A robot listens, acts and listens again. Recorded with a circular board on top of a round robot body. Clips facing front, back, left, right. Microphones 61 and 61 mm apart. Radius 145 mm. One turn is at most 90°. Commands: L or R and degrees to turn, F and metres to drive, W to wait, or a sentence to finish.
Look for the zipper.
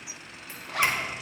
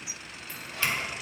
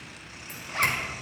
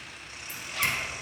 L30
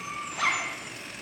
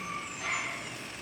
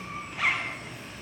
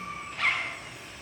Found it: a zipper, straight ahead.